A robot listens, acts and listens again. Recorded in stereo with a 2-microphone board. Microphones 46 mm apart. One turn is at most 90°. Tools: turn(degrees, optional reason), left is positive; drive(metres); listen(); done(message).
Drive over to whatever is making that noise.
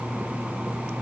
listen()
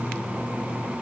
listen()
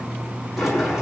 turn(degrees=-30)
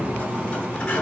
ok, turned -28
turn(degrees=25, reason="So it is at 25° left.")
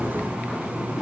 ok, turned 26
listen()
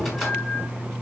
drive(metres=1.0)
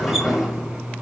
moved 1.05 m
turn(degrees=-10, reason="The sliding door is now 10° right.")
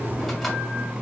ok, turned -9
listen()
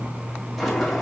drive(metres=1.0)
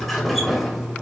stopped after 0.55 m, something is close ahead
done("Arrived at the sliding door, straight ahead.")